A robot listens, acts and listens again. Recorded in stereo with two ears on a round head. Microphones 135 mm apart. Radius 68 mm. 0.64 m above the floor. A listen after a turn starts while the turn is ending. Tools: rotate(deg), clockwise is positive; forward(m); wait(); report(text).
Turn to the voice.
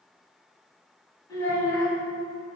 rotate(-30)
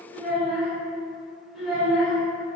report("Found it: a child speaking, straight ahead, 1 to 2 m away.")